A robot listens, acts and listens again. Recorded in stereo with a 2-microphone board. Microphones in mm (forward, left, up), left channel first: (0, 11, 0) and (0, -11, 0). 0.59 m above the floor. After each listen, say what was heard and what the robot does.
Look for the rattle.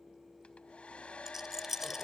The rattle: about 20° right or 160° right. Turn 20° right.
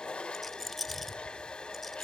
Facing the rattle.